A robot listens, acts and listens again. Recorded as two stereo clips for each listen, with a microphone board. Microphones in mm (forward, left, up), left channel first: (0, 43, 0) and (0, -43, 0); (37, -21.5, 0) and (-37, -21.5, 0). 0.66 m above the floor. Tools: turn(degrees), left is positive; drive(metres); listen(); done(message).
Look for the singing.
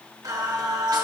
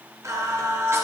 turn(degrees=-125)
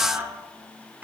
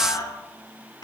turn(degrees=-20)
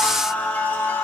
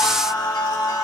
turn(degrees=30)
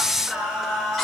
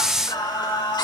done("Found it: singing, straight ahead.")